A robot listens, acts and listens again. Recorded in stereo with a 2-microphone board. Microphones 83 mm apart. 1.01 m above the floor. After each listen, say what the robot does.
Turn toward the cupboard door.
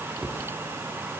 Turn 30° right.
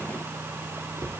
Turn 135° right.
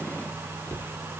Turn 25° left.
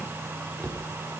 Turn 20° left.
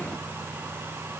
Keep listening.
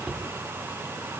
Found it: a cupboard door, straight ahead, 1 to 2 m away.